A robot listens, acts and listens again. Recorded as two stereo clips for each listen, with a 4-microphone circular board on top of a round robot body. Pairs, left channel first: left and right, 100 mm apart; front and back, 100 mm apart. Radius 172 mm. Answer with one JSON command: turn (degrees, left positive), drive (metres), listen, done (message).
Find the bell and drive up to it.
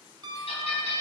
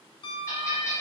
{"turn": 65}
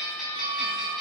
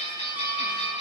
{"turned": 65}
{"drive": 1.0}
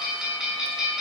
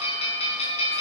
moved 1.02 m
{"drive": 1.0}
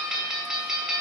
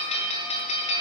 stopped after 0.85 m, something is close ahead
{"done": "I am next to the bell."}